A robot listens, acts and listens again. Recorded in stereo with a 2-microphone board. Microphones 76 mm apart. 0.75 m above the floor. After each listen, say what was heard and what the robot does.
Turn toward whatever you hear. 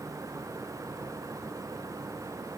Keep listening.
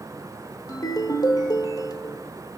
The ringtone: about 55° left or 125° left. Turn 55° left.
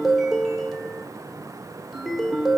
Facing the ringtone, 1 to 2 m away.